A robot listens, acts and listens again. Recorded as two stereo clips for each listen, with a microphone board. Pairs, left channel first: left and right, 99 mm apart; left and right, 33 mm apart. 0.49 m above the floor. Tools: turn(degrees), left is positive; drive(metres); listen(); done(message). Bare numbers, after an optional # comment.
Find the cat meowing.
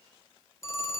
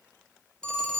listen()
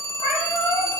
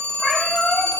turn(90)
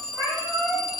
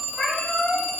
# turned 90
done("Facing the cat meowing, over 4 m away.")